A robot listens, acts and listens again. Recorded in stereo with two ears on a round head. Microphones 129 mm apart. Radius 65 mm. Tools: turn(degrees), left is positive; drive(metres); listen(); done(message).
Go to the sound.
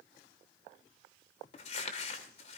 turn(degrees=45)
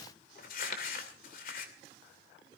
turn(degrees=80)
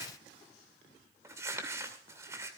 turn(degrees=-20)
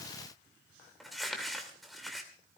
drive(metres=1.0)
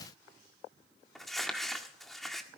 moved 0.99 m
drive(metres=1.0)
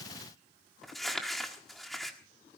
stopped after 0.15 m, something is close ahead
done("I am next to the crumpling.")